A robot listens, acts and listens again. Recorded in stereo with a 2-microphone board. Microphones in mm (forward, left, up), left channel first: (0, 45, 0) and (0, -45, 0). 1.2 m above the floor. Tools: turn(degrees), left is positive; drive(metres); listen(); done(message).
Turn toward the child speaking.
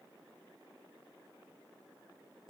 listen()
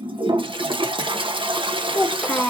turn(degrees=15)
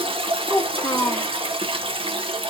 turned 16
turn(degrees=150)
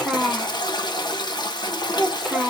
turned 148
done("Found it: a child speaking, straight ahead, under 1 m away.")